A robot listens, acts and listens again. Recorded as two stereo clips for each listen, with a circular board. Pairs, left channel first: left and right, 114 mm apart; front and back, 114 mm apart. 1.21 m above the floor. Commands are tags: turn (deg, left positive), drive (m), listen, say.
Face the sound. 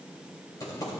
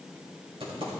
<turn deg="145"/>
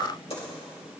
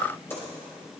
<turn deg="70"/>
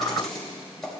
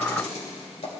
<say>Facing the typing on a keyboard, 2 to 4 m away.</say>